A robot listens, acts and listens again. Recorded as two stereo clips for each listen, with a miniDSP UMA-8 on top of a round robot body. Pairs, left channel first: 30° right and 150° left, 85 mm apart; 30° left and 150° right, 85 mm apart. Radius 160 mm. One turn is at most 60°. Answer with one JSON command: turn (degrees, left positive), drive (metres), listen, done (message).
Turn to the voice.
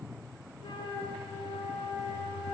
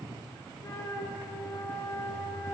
{"listen": true}
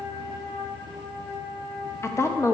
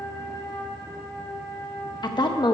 {"turn": 20}
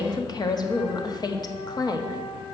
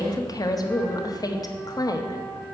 {"done": "Found it: a woman speaking, straight ahead."}